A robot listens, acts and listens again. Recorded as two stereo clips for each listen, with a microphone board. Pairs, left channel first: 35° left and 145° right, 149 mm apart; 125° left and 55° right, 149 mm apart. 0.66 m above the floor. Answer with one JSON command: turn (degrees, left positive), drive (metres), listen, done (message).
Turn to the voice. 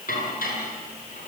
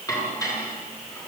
{"listen": true}
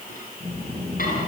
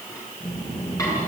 {"turn": 85}
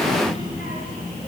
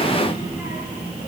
{"turn": 20}
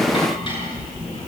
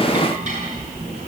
{"turn": 10}
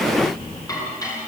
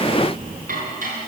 {"done": "Facing the child speaking."}